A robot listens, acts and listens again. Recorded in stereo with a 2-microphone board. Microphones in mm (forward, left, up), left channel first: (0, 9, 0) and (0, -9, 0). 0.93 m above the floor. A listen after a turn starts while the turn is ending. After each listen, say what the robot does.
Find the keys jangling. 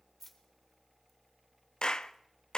Turn 15° left.
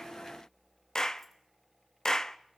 Keep listening.
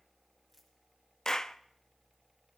Keep listening.
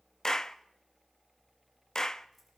I heard keys jangling, but can't make it out now. It was about straight ahead or 150° left.